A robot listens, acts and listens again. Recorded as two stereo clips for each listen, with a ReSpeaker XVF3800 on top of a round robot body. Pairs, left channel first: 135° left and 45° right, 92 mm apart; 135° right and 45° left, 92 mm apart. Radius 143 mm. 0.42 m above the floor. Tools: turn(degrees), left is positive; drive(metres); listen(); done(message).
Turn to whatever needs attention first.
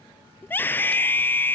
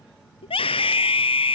turn(degrees=-155)
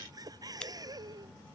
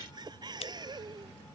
listen()
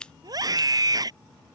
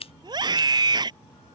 done("Facing the scream.")